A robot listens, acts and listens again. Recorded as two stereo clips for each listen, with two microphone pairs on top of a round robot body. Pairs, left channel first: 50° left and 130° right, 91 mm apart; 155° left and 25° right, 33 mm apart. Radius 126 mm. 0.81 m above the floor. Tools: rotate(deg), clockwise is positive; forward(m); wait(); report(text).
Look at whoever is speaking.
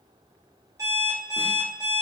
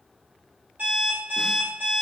wait()
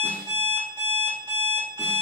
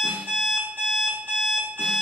wait()
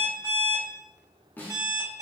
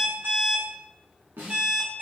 report("I can't make out anyone speaking to turn to.")